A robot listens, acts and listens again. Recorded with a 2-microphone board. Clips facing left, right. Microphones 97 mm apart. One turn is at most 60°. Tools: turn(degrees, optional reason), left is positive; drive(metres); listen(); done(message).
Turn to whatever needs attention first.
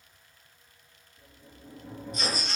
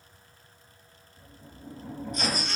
turn(degrees=-40, reason="The baby crying: about 40° right or 140° right.")
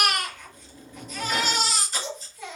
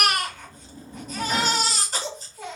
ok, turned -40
turn(degrees=-60, reason="So it is at 95° right.")
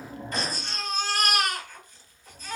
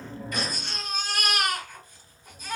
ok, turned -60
turn(degrees=-15, reason="The baby crying is now 15° right.")
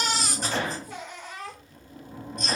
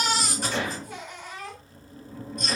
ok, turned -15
done("Facing the baby crying.")